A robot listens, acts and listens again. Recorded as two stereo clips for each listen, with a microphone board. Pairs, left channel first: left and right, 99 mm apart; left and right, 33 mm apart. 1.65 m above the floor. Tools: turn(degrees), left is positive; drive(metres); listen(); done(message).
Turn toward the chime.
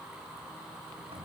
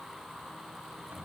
listen()
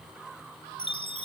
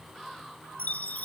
turn(degrees=65)
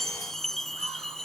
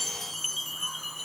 done("Found it: a chime, straight ahead.")